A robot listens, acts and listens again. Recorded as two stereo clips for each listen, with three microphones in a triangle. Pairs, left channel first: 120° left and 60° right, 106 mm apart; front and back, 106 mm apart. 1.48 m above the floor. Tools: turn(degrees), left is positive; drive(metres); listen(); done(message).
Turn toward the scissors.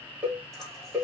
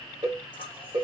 turn(degrees=30)
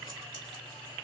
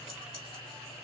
listen()
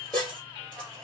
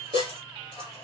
turn(degrees=-10)
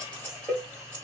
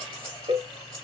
done("Facing the scissors.")